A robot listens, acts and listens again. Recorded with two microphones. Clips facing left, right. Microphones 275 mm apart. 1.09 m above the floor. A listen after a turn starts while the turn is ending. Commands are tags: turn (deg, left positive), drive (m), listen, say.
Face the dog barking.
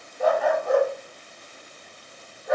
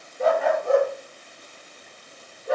<turn deg="-35"/>
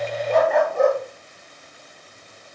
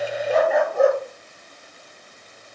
<say>Facing the dog barking, over 4 m away.</say>